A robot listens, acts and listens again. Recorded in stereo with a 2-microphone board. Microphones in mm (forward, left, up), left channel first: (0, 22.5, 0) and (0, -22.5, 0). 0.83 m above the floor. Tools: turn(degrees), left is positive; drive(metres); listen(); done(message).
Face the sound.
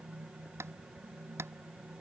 turn(degrees=-90)
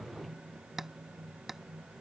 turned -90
done("Facing the tapping.")